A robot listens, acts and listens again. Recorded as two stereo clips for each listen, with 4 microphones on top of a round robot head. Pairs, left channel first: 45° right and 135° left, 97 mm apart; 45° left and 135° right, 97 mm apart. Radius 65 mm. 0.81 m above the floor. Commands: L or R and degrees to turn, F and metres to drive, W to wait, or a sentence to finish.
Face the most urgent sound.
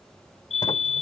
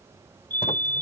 R30
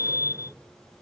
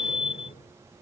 L15
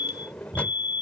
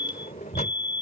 Found it: a fire alarm, straight ahead.